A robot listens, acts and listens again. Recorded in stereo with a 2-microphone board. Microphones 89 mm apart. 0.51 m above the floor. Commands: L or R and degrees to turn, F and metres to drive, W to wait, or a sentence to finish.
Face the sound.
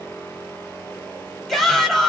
L30
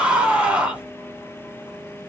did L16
R10
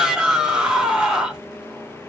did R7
R10
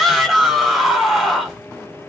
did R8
Facing the shout, 1 to 2 m away.